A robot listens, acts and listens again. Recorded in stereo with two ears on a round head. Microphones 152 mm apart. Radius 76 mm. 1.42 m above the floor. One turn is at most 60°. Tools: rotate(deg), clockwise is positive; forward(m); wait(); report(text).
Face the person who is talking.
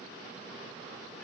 wait()
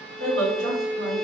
rotate(60)
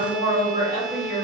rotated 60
rotate(20)
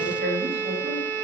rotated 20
rotate(10)
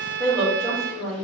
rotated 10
report("Facing the woman speaking.")